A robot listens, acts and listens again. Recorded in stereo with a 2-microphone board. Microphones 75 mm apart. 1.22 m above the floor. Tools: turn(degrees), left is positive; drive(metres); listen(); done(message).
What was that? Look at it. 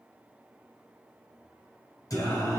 turn(degrees=50)
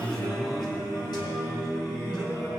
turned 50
turn(degrees=75)
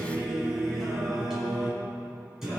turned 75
done("Found it: singing, straight ahead.")